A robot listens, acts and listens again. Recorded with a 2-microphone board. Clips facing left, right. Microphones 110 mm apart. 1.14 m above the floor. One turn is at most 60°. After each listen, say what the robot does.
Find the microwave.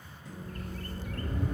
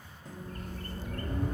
Turn 50° right.
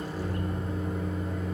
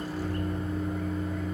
Facing the microwave.